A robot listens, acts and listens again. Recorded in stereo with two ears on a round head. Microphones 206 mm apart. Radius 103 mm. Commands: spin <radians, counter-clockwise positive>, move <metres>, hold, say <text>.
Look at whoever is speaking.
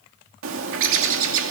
hold
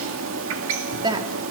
spin -0.35
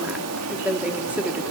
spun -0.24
say Found it: a woman speaking, straight ahead.